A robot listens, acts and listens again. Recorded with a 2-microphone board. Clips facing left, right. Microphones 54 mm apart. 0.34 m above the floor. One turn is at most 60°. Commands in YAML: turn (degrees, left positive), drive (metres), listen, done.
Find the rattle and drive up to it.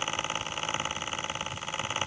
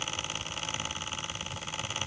listen: true
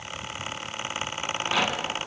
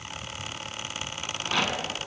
turn: 30
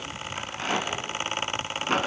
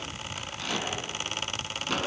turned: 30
turn: 60
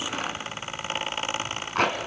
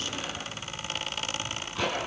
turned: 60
turn: 60
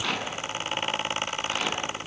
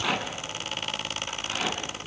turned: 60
drive: 1.0
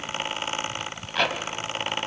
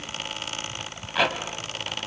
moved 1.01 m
drive: 1.0
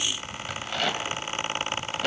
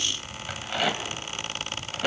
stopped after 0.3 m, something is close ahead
turn: -10
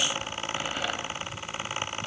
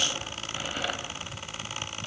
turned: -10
listen: true
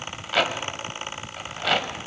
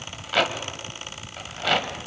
done: "Arrived at the rattle, straight ahead."